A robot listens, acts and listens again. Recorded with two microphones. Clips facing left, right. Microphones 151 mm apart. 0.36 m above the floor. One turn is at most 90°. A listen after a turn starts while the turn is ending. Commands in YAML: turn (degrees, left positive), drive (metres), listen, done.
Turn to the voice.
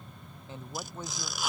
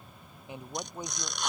turn: -15
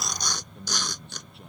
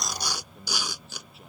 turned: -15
done: "Found it: a man speaking, straight ahead."